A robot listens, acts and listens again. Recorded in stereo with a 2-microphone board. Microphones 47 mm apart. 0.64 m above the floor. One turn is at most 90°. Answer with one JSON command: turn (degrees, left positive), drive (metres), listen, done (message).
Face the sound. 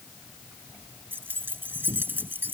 {"turn": -45}
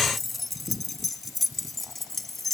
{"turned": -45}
{"done": "Facing the keys jangling."}